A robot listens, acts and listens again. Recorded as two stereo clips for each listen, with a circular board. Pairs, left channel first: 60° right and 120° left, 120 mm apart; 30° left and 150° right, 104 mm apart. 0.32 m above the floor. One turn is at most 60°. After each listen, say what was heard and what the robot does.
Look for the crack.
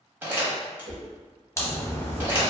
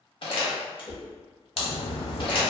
Found it: a crack, straight ahead, under 1 m away.